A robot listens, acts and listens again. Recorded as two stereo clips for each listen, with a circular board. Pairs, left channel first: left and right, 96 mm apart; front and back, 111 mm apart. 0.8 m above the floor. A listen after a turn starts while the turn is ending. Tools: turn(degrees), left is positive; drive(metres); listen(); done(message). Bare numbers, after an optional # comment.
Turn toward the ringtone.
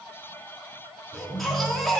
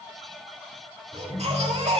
# The ringtone: 80° right.
turn(-80)
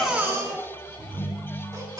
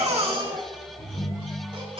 # The ringtone is now 35° right.
turn(-35)
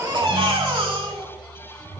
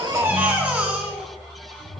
done("Found it: a ringtone, straight ahead.")